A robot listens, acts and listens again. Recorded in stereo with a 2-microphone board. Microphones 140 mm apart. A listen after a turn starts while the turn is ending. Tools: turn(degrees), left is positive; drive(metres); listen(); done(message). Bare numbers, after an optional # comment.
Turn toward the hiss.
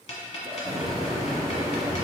# The hiss: about 25° right or 155° right.
turn(-25)
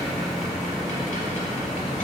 done("Found it: a hiss, straight ahead, 1 to 2 m away.")